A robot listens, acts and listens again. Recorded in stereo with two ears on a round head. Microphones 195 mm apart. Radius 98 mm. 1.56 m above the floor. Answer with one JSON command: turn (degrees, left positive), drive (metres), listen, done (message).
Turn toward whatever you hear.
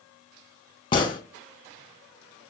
{"turn": 20}
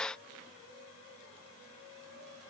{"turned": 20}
{"listen": true}
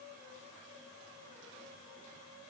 {"done": "I heard a gunshot, but can't make it out now. It was about straight ahead or 140° left."}